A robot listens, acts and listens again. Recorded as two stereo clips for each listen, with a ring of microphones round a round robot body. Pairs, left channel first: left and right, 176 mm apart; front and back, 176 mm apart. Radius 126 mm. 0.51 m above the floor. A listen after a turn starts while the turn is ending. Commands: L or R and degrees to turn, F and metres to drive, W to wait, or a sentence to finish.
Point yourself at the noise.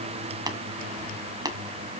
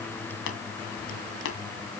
R20
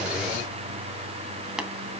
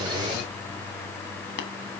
W
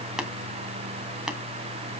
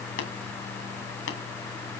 Facing the tapping.